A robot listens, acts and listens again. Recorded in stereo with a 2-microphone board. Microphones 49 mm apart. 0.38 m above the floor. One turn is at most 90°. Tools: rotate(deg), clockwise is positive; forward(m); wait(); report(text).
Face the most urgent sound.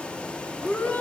rotate(-30)
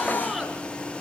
wait()
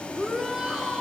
report("Facing the shout, over 4 m away.")